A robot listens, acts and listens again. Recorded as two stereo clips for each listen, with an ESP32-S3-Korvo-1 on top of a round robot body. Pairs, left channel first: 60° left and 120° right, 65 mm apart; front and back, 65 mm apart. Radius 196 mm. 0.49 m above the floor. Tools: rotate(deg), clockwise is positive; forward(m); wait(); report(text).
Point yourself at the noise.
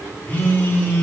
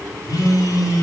report("Facing the phone buzzing.")